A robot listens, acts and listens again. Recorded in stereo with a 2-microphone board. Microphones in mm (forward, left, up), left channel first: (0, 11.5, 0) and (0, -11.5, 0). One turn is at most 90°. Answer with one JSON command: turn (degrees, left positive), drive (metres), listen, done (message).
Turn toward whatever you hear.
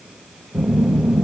{"turn": -40}
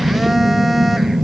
{"turn": -10}
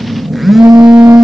{"done": "Found it: a phone buzzing, straight ahead, under 1 m away."}